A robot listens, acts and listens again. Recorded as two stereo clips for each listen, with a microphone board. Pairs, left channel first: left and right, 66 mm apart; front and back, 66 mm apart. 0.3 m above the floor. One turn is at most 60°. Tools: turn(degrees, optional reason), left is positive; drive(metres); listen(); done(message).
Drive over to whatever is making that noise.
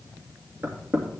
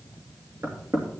turn(degrees=-60, reason="The knocking: 145° right.")
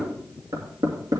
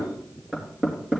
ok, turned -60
turn(degrees=-60, reason="The knocking is now 100° right.")
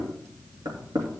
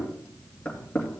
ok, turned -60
turn(degrees=-60, reason="The knocking is now 70° right.")
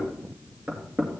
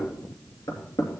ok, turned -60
turn(degrees=-20, reason="The knocking is now 20° right.")
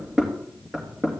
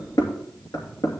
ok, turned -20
drive(metres=1.0)
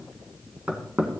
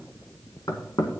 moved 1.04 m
turn(degrees=-10, reason="The knocking is now 10° right.")
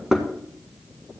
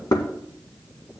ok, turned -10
drive(metres=1.0)
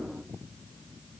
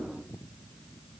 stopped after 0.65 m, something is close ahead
listen()
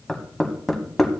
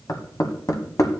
done("I am next to the knocking.")